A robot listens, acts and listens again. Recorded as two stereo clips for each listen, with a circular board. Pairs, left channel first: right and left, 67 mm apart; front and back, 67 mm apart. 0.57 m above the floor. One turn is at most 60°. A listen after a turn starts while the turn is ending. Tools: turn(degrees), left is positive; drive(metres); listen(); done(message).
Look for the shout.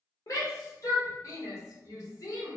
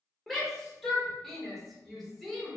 turn(degrees=-60)
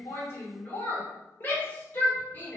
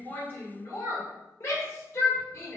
turn(degrees=-35)
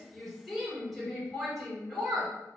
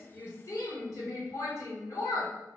done("Facing the shout.")